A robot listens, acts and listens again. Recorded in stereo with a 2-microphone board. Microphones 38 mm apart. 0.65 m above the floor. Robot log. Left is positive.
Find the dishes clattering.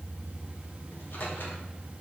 cmd idle
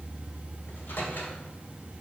cmd idle
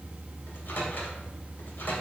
end: I can't make out dishes clattering, only a microwave.